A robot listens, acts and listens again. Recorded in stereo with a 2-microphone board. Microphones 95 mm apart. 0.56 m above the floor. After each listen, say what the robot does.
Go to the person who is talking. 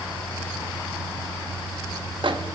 Keep listening.
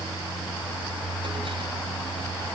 Keep listening.
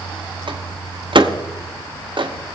I can't make out anyone speaking to turn to.